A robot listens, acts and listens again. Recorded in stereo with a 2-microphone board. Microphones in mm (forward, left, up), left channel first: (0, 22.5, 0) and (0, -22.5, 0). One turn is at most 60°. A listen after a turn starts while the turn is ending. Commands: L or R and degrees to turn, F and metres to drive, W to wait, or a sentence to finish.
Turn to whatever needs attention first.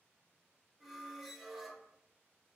W
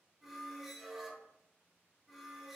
W
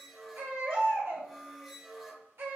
R60
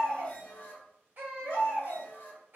R45
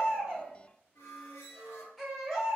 Found it: a baby crying, straight ahead, 1 to 2 m away.